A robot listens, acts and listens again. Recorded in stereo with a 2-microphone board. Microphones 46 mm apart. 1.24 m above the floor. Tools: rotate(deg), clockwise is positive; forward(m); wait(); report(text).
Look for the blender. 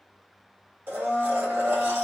rotate(60)
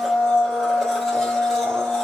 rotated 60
report("Found it: a blender, straight ahead, 1 to 2 m away.")